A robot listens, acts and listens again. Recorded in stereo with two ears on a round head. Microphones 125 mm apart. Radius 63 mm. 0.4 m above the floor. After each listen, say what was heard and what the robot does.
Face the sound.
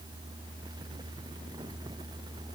Keep listening.
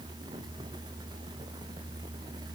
Keep listening.
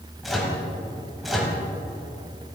Turn 30° left.
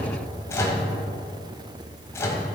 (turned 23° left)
So it is at 155° left. Turn 155° left.
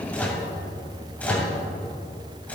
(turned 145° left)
The microwave is now 10° left. Turn 10° left.
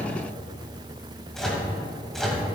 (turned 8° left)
Facing the microwave.